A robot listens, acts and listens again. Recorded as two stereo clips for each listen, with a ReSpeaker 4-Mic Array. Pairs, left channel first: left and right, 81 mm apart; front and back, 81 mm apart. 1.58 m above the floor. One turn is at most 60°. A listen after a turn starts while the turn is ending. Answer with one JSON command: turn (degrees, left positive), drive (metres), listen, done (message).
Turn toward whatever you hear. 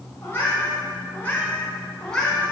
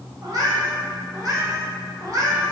{"turn": 60}
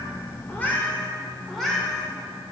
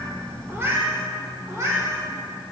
{"turn": -60}
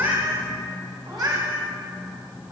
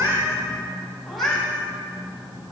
{"turn": -60}
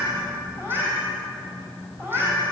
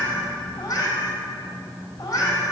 {"turn": -35}
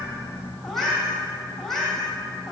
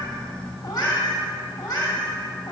{"done": "Facing the cat meowing, 2 to 4 m away."}